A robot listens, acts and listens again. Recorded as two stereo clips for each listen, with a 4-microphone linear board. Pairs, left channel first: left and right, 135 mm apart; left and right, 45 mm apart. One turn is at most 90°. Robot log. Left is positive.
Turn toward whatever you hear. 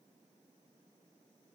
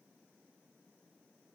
cmd idle
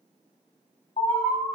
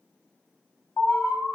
note: The alarm: about 60° left or 120° left.
cmd yaw +60
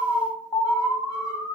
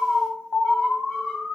note: So it is at 35° left.
cmd yaw +35
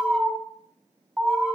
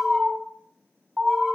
end: Facing the alarm.